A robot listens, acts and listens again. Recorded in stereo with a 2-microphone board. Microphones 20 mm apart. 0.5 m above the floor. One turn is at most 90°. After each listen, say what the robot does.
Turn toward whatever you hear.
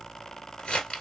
Turn 50° left.
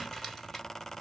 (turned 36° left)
Keep listening.
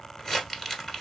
Turn 15° left.
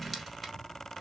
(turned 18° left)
Keep listening.
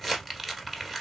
Facing the crumpling.